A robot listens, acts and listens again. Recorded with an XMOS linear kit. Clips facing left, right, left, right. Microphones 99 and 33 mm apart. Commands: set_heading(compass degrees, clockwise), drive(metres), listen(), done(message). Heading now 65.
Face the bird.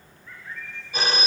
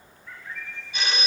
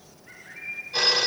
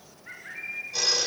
set_heading(140)
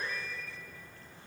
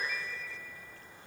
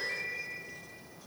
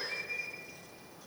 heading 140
done("Facing the bird.")